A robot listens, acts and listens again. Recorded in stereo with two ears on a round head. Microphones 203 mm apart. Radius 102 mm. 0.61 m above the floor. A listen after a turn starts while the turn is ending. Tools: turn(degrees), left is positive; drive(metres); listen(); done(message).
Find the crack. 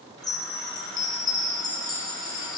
listen()
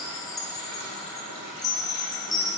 listen()
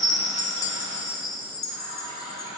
done("I can't make out a crack, only a chime and a running tap.")